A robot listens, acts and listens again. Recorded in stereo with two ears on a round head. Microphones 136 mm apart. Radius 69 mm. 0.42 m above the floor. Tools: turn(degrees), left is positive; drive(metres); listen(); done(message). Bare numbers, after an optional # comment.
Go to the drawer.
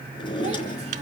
# The drawer: about 35° left or 145° left.
turn(35)
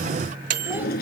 # So it is at 110° left.
turn(110)
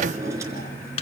# The drawer is now 20° right.
turn(-20)
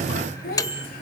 listen()
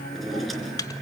drive(1.0)
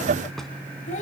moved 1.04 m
listen()
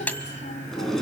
drive(1.0)
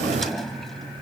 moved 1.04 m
drive(1.0)
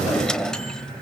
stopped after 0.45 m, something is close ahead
done("I am next to the drawer.")